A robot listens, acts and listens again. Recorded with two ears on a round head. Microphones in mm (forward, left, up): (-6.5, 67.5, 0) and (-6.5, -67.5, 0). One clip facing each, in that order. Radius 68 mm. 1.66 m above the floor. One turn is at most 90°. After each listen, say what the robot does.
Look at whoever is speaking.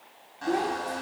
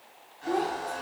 Turn 30° left.
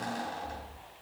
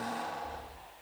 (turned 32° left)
Keep listening.
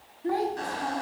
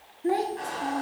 Turn 25° right.
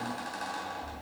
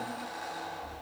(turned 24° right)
Keep listening.
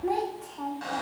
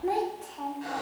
Facing the child speaking.